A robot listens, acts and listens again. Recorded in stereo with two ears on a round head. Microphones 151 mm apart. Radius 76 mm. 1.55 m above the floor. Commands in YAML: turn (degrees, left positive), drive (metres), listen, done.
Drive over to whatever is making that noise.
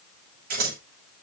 turn: -60
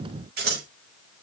turn: -60
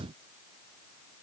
turn: -10
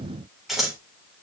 drive: 1.0
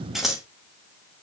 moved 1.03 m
drive: 1.0
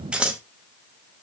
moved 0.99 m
drive: 1.0
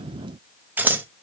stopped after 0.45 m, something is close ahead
turn: -10
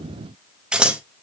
done: "Arrived at the scissors, straight ahead."